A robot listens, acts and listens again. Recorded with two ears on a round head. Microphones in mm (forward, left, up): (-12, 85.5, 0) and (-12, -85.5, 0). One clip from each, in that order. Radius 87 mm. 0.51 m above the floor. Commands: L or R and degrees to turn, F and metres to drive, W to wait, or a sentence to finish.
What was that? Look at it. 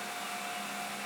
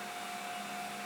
W
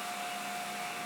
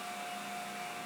W
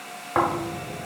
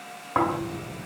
L30
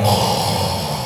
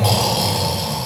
R30
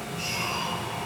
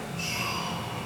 Found it: snoring, straight ahead.